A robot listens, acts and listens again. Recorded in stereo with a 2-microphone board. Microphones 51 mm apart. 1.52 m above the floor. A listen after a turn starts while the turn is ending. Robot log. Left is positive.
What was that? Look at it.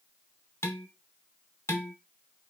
note: The dishes clattering: about 65° left or 115° left.
cmd yaw +65
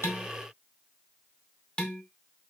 note: So it is at 25° left.
cmd yaw +25
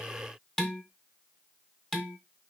note: The dishes clattering is now 15° left.
cmd yaw +15
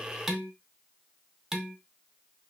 end: Facing the dishes clattering, 1 to 2 m away.